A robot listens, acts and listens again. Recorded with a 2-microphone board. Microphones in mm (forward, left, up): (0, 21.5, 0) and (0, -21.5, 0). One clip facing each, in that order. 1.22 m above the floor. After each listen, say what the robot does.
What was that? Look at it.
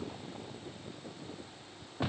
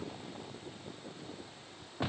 Keep listening.
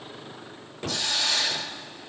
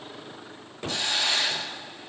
Turn 30° right.
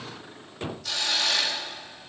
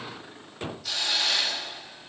Facing the hiss.